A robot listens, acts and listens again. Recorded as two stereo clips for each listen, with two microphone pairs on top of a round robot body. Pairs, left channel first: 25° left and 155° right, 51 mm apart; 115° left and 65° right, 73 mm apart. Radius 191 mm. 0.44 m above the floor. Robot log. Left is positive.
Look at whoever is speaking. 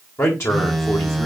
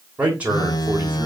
end: Found it: a man speaking, straight ahead.